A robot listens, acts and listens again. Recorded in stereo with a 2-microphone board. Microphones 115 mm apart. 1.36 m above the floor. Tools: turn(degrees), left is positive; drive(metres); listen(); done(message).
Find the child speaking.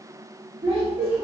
turn(degrees=-55)
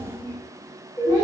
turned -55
turn(degrees=-35)
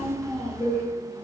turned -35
turn(degrees=10)
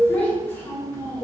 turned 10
turn(degrees=30)
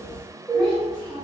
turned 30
turn(degrees=15)
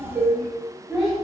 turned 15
done("Found it: a child speaking, straight ahead.")